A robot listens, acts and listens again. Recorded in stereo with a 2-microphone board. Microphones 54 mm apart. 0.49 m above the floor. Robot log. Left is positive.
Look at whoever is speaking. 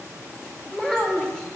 note: The child speaking: about 15° left or 165° left.
cmd yaw +15
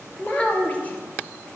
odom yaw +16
note: So it is at 150° left.
cmd yaw +150
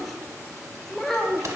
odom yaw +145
end: Facing the child speaking.